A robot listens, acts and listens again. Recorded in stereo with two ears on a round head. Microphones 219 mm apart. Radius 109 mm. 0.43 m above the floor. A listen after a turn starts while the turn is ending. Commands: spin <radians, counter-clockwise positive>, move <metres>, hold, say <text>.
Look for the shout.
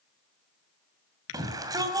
spin -0.26
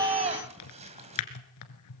spin -2.62
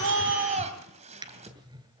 spin -0.52
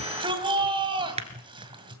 spin -0.44
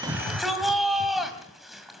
say Found it: a shout, straight ahead.